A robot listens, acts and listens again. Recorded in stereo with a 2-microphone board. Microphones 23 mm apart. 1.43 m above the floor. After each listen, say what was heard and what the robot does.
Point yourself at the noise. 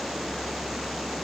Keep listening.
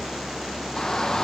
The shout: about 30° left or 150° left. Turn 30° left.
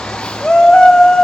So it is at 125° left. Turn 125° left.
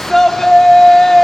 The shout is now 15° left. Turn 15° left.
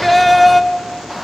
Facing the shout, 1 to 2 m away.